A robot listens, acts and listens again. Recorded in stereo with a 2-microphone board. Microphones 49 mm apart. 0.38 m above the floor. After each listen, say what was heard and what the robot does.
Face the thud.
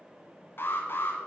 Keep listening.
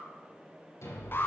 The thud: about 65° left or 115° left. Turn 65° left.
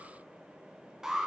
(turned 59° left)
Keep listening.
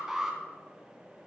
I heard a thud, but can't make it out now. It was about 10° left or 55° left.